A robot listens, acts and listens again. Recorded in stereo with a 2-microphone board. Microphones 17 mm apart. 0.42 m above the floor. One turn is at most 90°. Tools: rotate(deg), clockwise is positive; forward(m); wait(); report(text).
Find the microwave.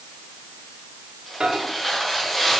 rotate(50)
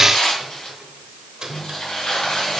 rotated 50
rotate(65)
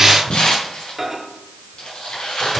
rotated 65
rotate(20)
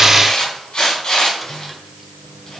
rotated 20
wait()
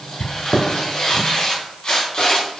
report("Found it: a microwave, straight ahead, 1 to 2 m away.")